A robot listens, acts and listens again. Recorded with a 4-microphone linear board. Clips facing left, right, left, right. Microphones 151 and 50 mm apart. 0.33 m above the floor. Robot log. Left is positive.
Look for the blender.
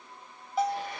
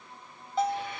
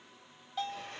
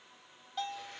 note: The blender: about 40° left or 140° left.
cmd yaw +40
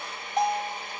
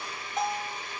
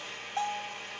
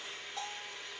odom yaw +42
note: So it is at 90° left.
cmd yaw +90
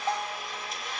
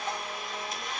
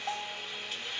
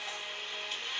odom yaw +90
end: Facing the blender.